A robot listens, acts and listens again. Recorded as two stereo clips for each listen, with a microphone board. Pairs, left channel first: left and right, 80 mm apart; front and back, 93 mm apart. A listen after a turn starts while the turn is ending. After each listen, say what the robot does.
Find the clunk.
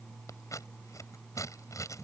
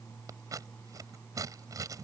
Keep listening.
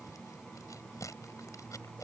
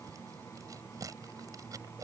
Keep listening.
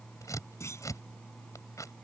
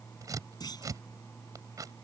Turn 40° left.
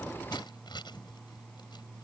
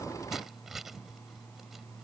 Facing where the clunk came from. I can't hear it now.